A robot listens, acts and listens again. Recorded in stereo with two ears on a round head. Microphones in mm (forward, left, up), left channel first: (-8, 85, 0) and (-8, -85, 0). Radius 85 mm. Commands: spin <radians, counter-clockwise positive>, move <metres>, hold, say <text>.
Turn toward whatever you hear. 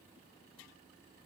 hold
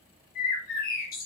spin 0.87
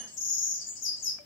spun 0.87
spin 1.31
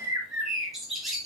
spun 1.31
say Found it: a bird, straight ahead.